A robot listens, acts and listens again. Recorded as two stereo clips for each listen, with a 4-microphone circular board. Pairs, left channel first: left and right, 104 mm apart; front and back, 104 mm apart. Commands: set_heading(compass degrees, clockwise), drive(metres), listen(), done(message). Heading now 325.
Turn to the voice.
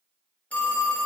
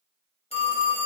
listen()
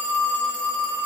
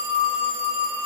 listen()
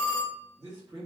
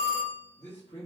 set_heading(15)
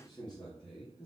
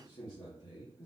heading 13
set_heading(353)
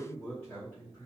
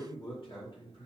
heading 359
set_heading(339)
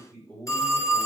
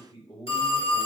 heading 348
set_heading(333)
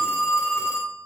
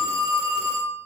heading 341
set_heading(331)
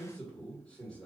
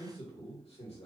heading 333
set_heading(323)
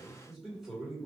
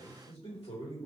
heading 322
done("Found it: a man speaking, straight ahead, 1 to 2 m away.")